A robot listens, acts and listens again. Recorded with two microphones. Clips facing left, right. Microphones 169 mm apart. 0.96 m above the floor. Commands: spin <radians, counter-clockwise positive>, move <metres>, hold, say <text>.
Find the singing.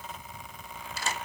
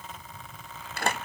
hold
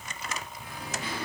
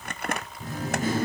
spin -0.87
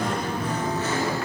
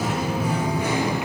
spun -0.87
spin -0.26
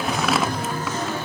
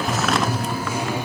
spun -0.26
spin -0.26
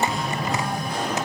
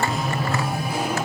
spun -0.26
spin -0.17
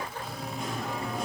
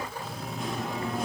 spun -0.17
say Found it: singing, straight ahead, 2 to 4 m away.